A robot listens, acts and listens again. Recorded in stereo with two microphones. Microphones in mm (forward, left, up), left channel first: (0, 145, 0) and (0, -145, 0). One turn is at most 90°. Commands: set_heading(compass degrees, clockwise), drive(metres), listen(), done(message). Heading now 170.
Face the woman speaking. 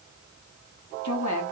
set_heading(80)
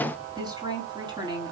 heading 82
set_heading(97)
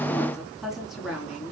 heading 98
done("Facing the woman speaking.")